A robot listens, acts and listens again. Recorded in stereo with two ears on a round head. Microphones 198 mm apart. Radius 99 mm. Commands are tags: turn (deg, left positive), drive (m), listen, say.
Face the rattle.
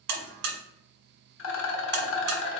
<turn deg="60"/>
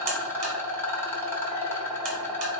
<turn deg="10"/>
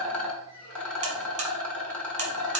<say>Facing the rattle, under 1 m away.</say>